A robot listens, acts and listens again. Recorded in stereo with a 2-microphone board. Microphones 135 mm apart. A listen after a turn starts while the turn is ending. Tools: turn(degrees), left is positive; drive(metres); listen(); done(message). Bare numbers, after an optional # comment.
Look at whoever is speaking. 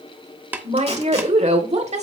# The woman speaking: about 55° right or 125° right.
turn(-55)
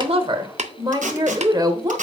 # So it is at 35° right.
turn(-35)
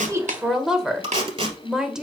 done("Found it: a woman speaking, straight ahead, 1 to 2 m away.")